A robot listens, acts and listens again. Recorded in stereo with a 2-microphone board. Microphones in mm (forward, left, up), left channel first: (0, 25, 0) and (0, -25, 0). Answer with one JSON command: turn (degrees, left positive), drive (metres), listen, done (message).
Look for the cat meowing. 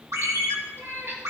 {"turn": -60}
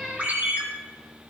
{"done": "Found it: a cat meowing, straight ahead, 2 to 4 m away."}